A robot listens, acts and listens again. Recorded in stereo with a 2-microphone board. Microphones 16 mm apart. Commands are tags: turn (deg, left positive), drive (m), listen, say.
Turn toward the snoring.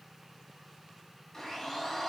<listen/>
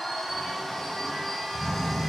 <turn deg="30"/>
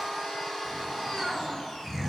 <turn deg="-20"/>
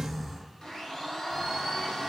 <say>Found it: snoring, straight ahead.</say>